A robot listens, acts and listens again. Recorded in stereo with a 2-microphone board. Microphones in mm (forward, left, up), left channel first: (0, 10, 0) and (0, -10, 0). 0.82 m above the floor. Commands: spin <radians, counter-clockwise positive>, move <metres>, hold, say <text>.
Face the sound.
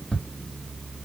spin 1.13
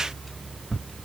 spin 0.35
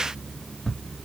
say Found it: ticking, straight ahead.